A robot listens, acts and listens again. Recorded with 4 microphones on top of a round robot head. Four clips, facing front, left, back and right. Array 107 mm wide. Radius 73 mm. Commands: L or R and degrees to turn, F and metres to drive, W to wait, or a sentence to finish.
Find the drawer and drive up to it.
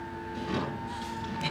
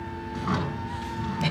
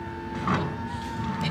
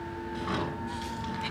L165
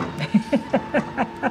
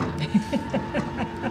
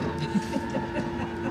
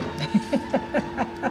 W
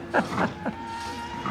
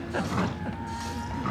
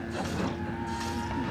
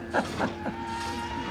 L40
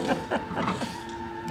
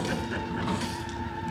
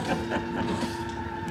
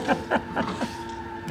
W
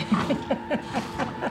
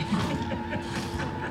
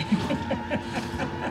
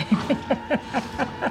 R10
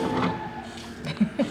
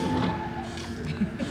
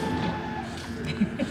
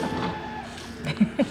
W
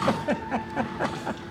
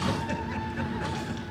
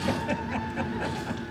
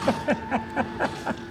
W
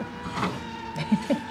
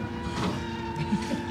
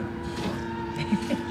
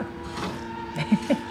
Facing where the drawer came from. I can't hear it now. I did not reach it.